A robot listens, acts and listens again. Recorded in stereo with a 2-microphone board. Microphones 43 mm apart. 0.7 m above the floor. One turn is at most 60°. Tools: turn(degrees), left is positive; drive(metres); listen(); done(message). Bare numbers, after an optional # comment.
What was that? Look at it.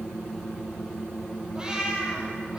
# The cat meowing: about 15° right or 165° right.
turn(-15)
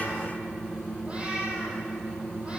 # The cat meowing: about 25° right or 155° right.
turn(-25)
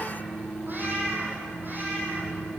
# So it is at 135° right.
turn(-60)
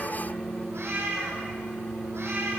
# The cat meowing is now 75° right.
turn(-60)
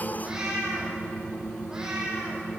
# The cat meowing is now 15° right.
turn(-15)
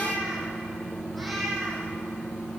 done("Facing the cat meowing, over 4 m away.")